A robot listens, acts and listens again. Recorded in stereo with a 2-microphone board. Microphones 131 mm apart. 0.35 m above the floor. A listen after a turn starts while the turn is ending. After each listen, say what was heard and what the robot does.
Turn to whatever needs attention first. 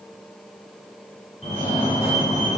The fire alarm: about 55° left or 125° left. Turn 55° left.
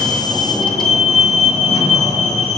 So it is at 60° left. Turn 60° left.
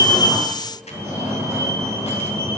The fire alarm is now 20° right. Turn 20° right.
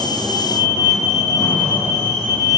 Facing the fire alarm.